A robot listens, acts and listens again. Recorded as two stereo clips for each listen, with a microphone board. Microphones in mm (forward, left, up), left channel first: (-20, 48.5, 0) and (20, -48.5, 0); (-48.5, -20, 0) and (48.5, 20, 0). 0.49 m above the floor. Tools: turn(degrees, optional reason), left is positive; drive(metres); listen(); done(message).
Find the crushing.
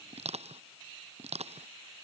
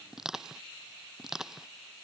turn(degrees=-65, reason="The crushing: 65° right.")
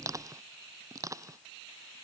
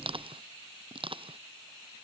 turn(degrees=-10, reason="The crushing is now 10° right.")
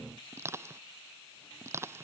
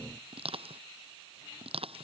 done("Facing the crushing.")